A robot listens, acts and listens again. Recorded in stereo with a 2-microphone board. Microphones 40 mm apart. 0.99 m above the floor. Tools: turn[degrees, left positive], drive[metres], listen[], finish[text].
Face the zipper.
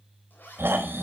Thought: The zipper: about 55° left or 125° left.
Action: turn[55]
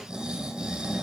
Action: listen[]
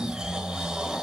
Action: listen[]
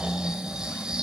Action: finish[I heard a zipper, but can't make it out now. It was about straight ahead or 70° left.]